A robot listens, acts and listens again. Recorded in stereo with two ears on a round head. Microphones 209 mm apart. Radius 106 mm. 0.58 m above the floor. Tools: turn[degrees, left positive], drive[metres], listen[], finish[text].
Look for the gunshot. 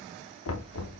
Action: listen[]
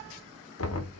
Action: listen[]
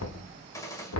Thought: The gunshot: about 15° left or 165° left.
Action: turn[15]
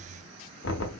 Action: listen[]
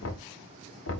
Action: finish[I heard a gunshot, but can't make it out now. It was about straight ahead or 150° left.]